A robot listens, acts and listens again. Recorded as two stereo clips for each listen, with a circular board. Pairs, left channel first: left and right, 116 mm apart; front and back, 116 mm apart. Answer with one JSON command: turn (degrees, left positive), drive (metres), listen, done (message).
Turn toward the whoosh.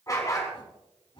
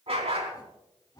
{"turn": 55}
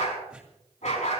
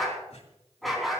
{"listen": true}
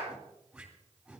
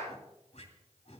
{"done": "Found it: a whoosh, straight ahead."}